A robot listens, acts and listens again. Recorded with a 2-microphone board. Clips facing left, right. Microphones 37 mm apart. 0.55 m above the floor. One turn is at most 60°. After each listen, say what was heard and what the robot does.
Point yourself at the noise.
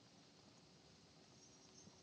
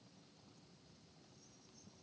Keep listening.
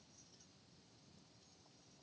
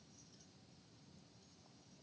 Keep listening.
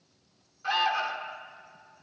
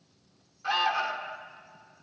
Turn 30° left.
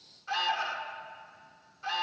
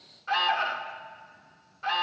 So it is at 30° right. Turn 30° right.
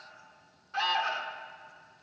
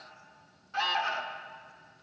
Found it: an alarm, straight ahead.